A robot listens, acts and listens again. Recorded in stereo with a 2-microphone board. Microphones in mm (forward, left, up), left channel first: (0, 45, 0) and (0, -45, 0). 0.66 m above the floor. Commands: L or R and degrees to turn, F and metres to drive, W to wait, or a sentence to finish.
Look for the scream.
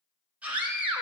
R15
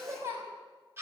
R150
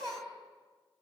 R50
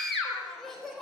Facing the scream, 2 to 4 m away.